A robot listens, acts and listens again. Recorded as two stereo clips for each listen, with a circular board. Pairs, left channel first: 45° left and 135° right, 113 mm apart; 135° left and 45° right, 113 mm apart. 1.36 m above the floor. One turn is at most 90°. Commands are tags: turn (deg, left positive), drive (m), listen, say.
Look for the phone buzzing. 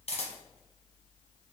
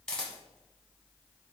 <listen/>
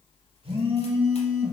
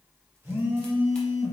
<turn deg="-90"/>
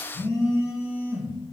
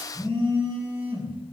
<turn deg="-15"/>
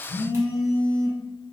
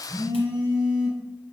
<say>Facing the phone buzzing.</say>